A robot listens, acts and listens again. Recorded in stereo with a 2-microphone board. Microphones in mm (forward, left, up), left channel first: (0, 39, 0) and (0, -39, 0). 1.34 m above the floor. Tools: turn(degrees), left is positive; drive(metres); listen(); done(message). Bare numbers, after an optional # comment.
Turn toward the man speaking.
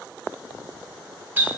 listen()
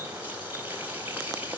listen()
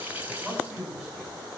turn(30)
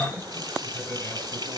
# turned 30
# So it is at 150° left.
turn(150)
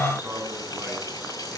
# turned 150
# The man speaking is now 25° right.
turn(-25)
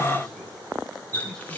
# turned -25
listen()
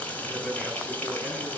done("Facing the man speaking, over 4 m away.")